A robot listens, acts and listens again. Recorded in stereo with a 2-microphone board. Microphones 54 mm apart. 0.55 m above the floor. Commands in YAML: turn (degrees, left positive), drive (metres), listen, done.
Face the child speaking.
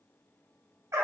listen: true
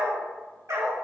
listen: true
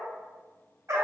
done: "I can't make out a child speaking to turn to."